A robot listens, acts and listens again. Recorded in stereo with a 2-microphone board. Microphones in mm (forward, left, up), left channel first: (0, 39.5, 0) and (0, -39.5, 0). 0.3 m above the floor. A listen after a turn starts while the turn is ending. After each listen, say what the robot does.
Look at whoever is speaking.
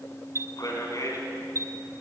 Turn 45° left.
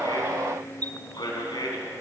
Turn 85° left.
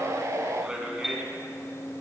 Turn 10° right.
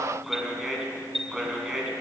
Found it: a man speaking, straight ahead.